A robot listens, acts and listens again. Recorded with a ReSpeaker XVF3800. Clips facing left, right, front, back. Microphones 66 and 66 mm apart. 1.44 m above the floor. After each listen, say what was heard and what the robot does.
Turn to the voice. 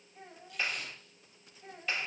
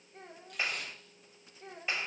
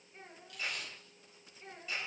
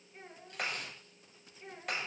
The child speaking: 95° right. Turn 95° right.
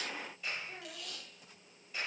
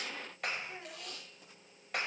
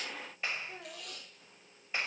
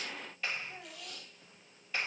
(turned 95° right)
Found it: a child speaking, straight ahead.